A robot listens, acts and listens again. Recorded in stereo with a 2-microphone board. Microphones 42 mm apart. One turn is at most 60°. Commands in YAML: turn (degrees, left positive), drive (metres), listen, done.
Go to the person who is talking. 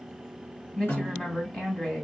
turn: 20
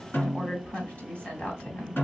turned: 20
turn: 60
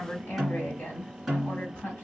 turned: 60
turn: 60
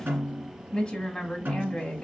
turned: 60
turn: 20
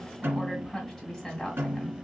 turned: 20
drive: 1.0
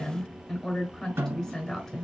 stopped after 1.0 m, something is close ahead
turn: 15
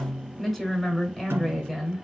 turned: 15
done: "I am next to the woman speaking."